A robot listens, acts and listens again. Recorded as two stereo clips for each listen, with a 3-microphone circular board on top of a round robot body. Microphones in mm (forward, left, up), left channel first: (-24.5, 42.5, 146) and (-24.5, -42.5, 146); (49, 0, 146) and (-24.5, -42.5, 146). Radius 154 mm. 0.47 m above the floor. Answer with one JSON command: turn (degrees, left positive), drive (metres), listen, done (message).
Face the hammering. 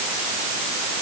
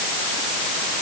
{"listen": true}
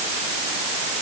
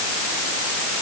{"listen": true}
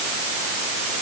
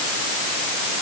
{"done": "I can't make out hammering to turn to."}